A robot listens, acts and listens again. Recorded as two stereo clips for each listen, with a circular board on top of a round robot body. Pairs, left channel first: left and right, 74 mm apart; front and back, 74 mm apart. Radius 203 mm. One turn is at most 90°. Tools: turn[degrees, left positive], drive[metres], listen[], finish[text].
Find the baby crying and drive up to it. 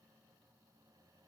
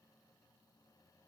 Action: listen[]
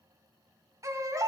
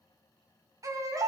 Thought: The baby crying: 135° right.
Action: turn[-90]
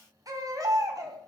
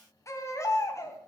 Thought: The baby crying is now 50° right.
Action: turn[-50]
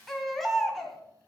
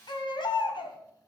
Action: drive[1.0]
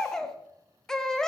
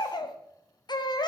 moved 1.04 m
Thought: The baby crying is now 10° left.
Action: turn[10]
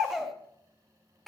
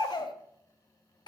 Action: drive[1.0]
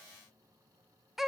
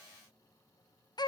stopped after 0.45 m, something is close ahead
Action: finish[Arrived at the baby crying, straight ahead.]